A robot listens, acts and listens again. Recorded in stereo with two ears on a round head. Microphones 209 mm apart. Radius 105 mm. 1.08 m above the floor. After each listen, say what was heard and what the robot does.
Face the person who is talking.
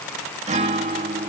Keep listening.
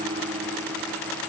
Keep listening.
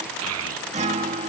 The child speaking: about 70° right or 110° right. Turn 70° right.
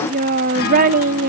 So it is at 35° right. Turn 35° right.
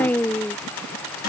Facing the child speaking.